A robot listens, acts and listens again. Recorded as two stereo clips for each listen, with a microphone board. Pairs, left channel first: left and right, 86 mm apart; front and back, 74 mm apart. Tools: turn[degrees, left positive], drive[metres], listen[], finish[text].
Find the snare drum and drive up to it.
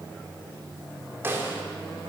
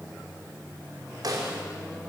Thought: The snare drum: 155° right.
Action: turn[-155]
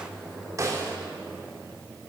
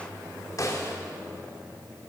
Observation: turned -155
Thought: The snare drum is now 40° right.
Action: turn[-40]
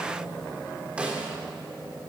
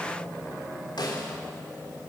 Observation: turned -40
Thought: The snare drum is now 15° right.
Action: turn[-15]
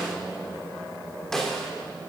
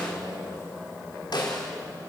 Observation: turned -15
Action: drive[1.0]
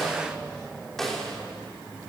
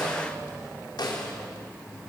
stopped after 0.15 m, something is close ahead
Action: finish[Blocked. The snare drum is further on, straight ahead.]